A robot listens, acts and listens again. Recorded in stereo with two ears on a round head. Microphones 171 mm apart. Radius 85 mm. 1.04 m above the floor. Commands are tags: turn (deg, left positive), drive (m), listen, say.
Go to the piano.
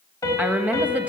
<turn deg="20"/>
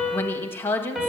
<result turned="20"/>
<drive m="1.0"/>
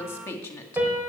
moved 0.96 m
<turn deg="-10"/>
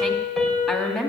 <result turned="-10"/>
<drive m="1.0"/>
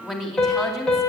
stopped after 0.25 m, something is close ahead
<say>Something is in my way. I am facing the piano but have not reached it.</say>